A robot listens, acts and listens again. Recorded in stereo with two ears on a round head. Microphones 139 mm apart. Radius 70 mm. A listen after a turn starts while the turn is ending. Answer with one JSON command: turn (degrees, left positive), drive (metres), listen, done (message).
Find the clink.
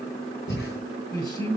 {"listen": true}
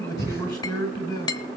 {"turn": 25}
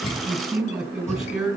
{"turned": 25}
{"listen": true}
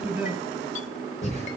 {"listen": true}
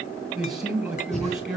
{"done": "I heard a clink, but can't make it out now. It was about straight ahead or 130° left."}